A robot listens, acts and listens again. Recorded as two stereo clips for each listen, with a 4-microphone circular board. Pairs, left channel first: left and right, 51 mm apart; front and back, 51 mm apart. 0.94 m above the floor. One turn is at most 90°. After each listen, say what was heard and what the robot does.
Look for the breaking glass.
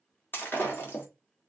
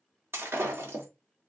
The breaking glass: 140° left. Turn 90° left.
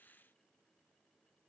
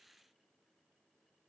Nothing new. It was at 50° left. Turn 50° left.
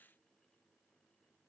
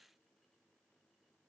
I heard breaking glass from this way, but can't make it out now.